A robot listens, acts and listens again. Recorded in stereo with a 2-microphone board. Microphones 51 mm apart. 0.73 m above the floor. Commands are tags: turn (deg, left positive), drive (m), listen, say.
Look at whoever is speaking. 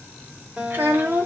<turn deg="-50"/>
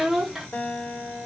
<turn deg="-10"/>
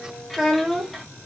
<say>Facing the child speaking.</say>